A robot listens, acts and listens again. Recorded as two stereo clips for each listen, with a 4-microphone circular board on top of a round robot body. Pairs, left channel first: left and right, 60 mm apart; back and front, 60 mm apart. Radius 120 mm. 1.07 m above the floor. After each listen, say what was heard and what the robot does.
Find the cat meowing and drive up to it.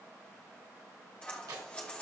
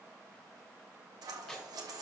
Keep listening.
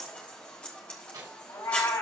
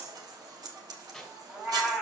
The cat meowing: 70° left. Turn 70° left.
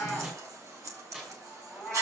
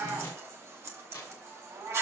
Drive 1.0 m forward.
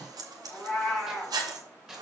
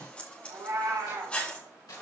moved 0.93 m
Drive 1.0 m forward.
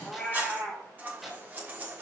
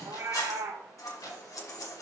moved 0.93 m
Drive 1.0 m forward.
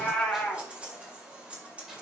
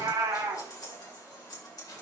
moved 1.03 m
The cat meowing is now 15° left. Turn 15° left.
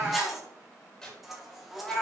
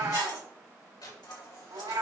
Drive 1.0 m forward.
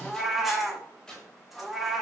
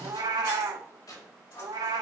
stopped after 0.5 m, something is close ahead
I am next to the cat meowing.